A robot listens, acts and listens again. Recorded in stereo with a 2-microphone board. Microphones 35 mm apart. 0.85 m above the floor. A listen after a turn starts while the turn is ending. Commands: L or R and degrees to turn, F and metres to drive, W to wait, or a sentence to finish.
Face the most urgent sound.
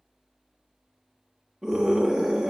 R30
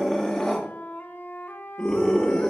Facing the scream, 1 to 2 m away.